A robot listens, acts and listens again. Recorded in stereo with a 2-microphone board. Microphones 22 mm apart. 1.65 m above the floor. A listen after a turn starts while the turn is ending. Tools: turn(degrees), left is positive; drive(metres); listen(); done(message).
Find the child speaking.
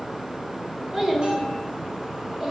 turn(degrees=-25)
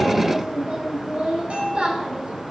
turn(degrees=-115)
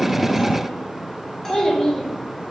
turn(degrees=30)
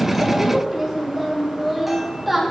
done("Facing the child speaking, over 4 m away.")